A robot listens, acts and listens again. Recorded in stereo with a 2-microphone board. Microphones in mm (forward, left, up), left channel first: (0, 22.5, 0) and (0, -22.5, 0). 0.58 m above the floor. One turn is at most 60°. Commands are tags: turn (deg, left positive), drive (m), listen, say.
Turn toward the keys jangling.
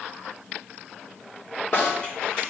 <listen/>
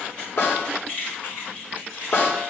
<turn deg="35"/>
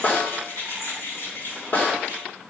<turn deg="60"/>
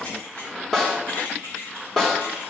<turn deg="60"/>
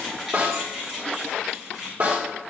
<say>Found it: keys jangling, straight ahead.</say>